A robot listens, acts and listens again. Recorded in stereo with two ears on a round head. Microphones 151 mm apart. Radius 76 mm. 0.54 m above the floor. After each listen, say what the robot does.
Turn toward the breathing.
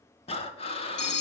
Turn 35° left.
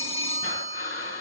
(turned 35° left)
Turn 105° left.
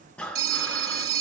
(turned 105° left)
Turn 10° left.
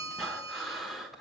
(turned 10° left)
Found it: breathing, straight ahead.